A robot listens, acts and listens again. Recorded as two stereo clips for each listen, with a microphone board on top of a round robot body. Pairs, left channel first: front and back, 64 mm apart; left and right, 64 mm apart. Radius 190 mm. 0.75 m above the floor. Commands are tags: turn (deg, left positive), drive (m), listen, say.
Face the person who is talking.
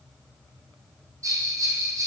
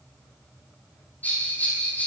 <listen/>
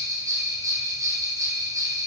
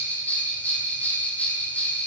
<listen/>
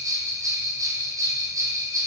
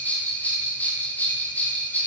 <say>I can't make out anyone speaking, only a bell.</say>